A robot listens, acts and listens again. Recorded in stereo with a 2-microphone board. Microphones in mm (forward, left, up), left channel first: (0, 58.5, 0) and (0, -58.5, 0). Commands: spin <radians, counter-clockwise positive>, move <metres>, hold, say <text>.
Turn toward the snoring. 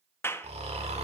spin -1.22
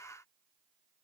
hold
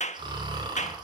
spin -0.70
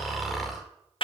say Found it: snoring, straight ahead, 2 to 4 m away.